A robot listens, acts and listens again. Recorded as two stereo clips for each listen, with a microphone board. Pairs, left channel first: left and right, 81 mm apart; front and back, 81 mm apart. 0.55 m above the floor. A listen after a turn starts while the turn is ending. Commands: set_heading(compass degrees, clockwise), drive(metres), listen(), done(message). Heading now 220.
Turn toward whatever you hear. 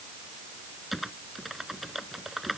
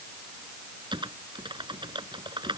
set_heading(40)
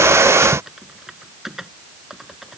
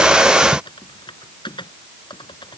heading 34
done("Found it: typing on a keyboard, straight ahead.")